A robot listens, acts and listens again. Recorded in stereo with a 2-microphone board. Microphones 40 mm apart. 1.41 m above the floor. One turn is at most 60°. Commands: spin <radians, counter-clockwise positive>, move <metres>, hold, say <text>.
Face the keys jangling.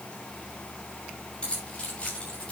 spin 0.52
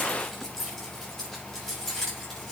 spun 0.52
spin 0.17
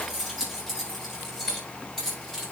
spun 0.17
spin 0.17
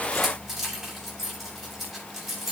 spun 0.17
say Found it: keys jangling, straight ahead, over 4 m away.